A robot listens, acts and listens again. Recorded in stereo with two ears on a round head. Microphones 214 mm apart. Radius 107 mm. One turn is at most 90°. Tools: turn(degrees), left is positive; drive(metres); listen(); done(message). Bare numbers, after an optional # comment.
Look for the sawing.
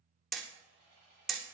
# The sawing: about 45° left or 135° left.
turn(45)
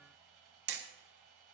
done("Found it: sawing, straight ahead, over 4 m away.")